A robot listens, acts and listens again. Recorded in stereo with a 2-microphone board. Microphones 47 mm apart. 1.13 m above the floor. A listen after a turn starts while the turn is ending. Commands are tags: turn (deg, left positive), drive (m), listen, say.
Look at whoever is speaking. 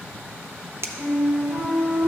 <listen/>
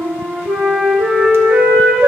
<listen/>
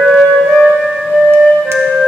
<say>I can't make out anyone speaking to turn to.</say>